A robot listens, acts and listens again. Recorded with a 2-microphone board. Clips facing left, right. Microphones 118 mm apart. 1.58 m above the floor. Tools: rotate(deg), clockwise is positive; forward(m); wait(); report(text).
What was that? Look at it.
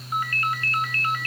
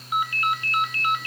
rotate(15)
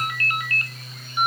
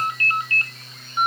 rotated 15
rotate(150)
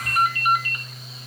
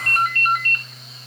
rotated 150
rotate(-10)
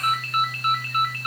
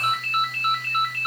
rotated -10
report("Found it: a ringtone, straight ahead.")